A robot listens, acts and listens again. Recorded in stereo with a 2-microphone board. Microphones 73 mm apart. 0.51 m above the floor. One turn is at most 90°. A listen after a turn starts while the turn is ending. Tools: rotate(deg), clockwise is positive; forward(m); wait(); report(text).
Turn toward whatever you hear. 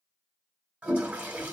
rotate(15)
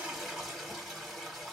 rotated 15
report("Facing the toilet flushing, 1 to 2 m away.")